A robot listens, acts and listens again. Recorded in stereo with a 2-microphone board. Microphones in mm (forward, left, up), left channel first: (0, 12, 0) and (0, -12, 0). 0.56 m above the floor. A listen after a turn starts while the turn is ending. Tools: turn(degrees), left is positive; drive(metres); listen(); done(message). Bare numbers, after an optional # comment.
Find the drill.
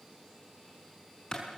listen()
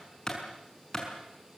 listen()
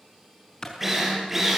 turn(-30)
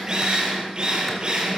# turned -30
# So it is at 145° right.
turn(-145)
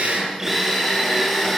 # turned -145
# The drill is now 15° right.
turn(-15)
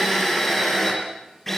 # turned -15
done("Found it: a drill, straight ahead, over 4 m away.")